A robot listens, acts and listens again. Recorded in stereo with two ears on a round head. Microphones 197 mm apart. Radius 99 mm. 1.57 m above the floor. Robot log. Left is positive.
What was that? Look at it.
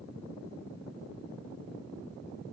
cmd idle
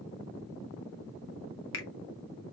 note: The finger snap: about 60° left or 120° left.
cmd yaw +60
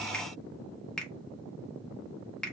end: Facing the finger snap, under 1 m away.